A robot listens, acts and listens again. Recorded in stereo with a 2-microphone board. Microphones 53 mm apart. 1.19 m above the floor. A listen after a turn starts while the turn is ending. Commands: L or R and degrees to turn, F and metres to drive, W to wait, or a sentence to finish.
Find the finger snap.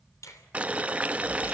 L90
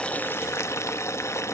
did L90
W
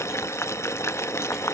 W
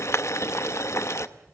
Facing where the finger snap came from. I can't hear it now.